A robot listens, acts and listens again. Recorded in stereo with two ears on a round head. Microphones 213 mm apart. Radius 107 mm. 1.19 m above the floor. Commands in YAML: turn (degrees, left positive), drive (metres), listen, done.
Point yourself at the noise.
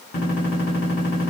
turn: 55
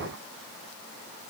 listen: true
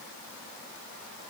done: "I heard a gunshot, but can't make it out now. It was about straight ahead or 70° left."